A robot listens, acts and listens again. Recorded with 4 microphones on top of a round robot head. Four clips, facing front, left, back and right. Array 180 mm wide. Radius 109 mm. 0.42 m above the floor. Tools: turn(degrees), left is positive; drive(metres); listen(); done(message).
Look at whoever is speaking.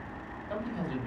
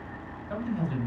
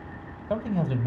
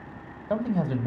turn(degrees=-125)
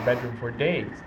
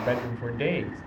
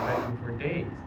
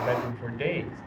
done("Found it: a man speaking, straight ahead.")